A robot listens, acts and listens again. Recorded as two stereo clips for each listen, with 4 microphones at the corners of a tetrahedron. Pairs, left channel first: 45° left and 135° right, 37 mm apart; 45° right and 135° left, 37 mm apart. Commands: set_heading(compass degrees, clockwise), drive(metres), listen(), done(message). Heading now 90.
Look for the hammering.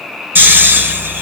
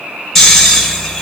listen()
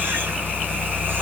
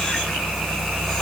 listen()
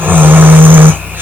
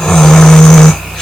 done("I can't make out hammering to turn to.")